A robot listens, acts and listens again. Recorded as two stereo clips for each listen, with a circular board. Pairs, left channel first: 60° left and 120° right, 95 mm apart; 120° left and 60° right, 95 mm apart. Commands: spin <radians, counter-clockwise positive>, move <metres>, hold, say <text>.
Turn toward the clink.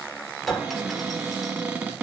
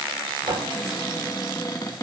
spin -0.52
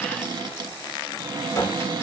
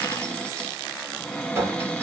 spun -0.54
say Facing the clink, 2 to 4 m away.